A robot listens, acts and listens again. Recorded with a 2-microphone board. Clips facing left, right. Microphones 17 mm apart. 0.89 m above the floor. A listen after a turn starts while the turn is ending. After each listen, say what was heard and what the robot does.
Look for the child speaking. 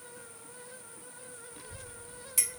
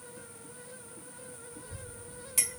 The child speaking: about 50° left or 130° left. Turn 50° left.
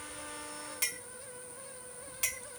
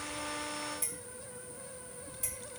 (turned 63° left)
So it is at 25° right. Turn 25° right.
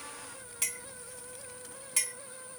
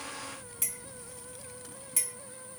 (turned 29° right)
Found it: a child speaking, straight ahead.